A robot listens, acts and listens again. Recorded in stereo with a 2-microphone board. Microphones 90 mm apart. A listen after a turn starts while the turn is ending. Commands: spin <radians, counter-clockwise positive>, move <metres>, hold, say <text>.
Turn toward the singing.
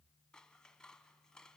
hold
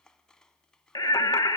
spin 0.70
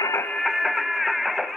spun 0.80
say Found it: singing, straight ahead, 1 to 2 m away.